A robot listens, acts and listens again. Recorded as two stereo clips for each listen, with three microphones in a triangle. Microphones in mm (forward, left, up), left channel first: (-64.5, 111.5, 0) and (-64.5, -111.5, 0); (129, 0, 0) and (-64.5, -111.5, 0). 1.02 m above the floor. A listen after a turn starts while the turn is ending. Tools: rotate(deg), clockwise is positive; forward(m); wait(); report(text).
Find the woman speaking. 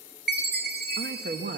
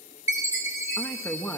rotate(50)
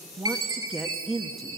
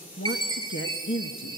report("Facing the woman speaking.")